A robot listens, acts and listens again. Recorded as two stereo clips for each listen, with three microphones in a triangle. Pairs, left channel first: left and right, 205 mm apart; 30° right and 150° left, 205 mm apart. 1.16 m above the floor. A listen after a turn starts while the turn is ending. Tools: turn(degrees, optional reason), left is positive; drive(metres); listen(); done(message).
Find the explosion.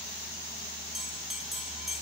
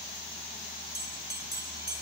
listen()
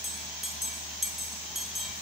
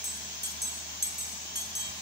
listen()
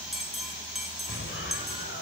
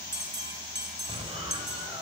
turn(degrees=85, reason="The explosion: 85° left.")
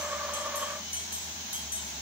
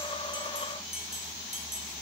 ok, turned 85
done("I heard an explosion from this way, but can't make it out now.")